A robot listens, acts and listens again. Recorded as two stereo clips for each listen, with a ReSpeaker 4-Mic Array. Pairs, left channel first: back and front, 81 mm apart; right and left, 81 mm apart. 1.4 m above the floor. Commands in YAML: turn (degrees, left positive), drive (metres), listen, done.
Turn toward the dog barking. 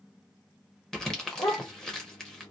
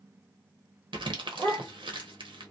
turn: 150
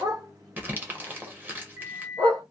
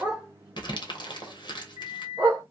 turn: 30
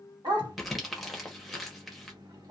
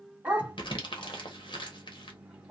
turn: 15
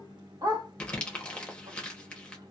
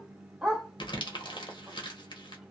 done: "Facing the dog barking."